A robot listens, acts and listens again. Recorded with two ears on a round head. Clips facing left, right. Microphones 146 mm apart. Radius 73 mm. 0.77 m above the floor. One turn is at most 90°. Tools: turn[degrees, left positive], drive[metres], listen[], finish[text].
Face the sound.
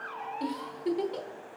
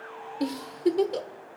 Thought: The giggle: about 60° right or 120° right.
Action: turn[-60]
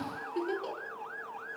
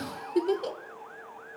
Thought: So it is at 60° right.
Action: turn[-60]
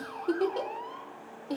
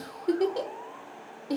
Thought: The giggle is now 15° right.
Action: turn[-15]
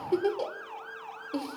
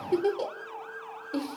Action: finish[Facing the giggle, 1 to 2 m away.]